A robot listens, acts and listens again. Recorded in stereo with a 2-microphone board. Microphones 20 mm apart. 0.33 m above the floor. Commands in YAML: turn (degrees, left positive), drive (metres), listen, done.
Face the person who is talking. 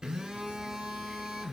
listen: true
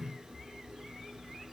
listen: true
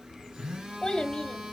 turn: 40
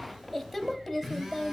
done: "Facing the child speaking, under 1 m away."